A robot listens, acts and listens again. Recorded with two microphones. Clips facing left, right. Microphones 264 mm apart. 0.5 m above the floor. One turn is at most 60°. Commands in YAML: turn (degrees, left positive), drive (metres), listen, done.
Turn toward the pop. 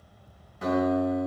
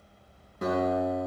listen: true
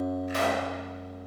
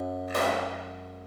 turn: -60
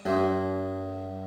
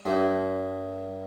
listen: true
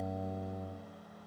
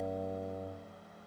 done: "I heard a pop, but can't make it out now. It was about 5° right or 55° right."